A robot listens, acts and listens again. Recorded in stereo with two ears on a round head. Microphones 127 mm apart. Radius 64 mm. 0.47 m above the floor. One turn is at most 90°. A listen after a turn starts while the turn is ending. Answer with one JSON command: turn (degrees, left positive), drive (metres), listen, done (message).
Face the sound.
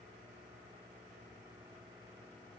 {"listen": true}
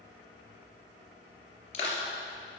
{"turn": 45}
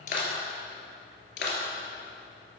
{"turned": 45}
{"turn": 90}
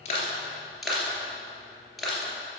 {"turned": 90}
{"done": "Facing the crushing."}